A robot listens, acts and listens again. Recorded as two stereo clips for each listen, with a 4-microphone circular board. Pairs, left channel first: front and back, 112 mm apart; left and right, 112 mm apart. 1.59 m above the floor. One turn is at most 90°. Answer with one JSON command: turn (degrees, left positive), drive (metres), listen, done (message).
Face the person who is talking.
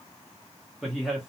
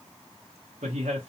{"turn": -90}
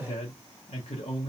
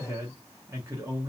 {"turn": -25}
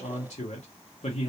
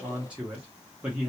{"turn": -10}
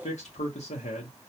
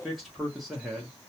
{"done": "Found it: a man speaking, straight ahead."}